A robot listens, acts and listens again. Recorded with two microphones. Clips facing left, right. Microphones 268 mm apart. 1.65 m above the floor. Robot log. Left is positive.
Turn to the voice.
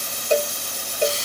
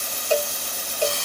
cmd idle
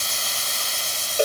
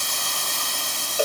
cmd idle
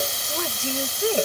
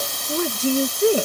note: The woman speaking: about 45° right or 135° right.
cmd yaw -45
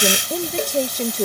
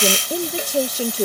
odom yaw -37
note: So it is at 10° right.
cmd yaw -10
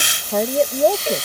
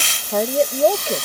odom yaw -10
end: Facing the woman speaking.